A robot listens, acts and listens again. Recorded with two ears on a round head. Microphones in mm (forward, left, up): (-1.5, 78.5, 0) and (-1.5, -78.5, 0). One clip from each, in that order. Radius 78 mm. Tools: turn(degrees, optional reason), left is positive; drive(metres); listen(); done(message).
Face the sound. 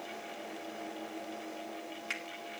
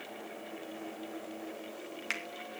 turn(degrees=-15, reason="The finger snap: about 15° right or 165° right.")
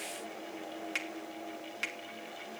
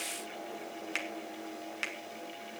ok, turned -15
done("Found it: a finger snap, straight ahead.")